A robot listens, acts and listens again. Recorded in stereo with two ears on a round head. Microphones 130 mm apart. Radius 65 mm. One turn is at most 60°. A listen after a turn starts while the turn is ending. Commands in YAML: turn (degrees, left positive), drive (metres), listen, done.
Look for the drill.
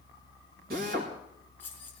turn: -60
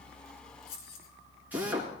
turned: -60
turn: -10
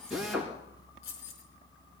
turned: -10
done: "Facing the drill."